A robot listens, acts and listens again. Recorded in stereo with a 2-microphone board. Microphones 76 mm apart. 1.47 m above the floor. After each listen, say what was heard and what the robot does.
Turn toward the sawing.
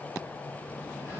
Keep listening.
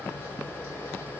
Keep listening.
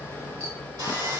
The sawing: about 55° right or 125° right. Turn 55° right.
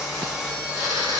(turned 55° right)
Found it: sawing, straight ahead.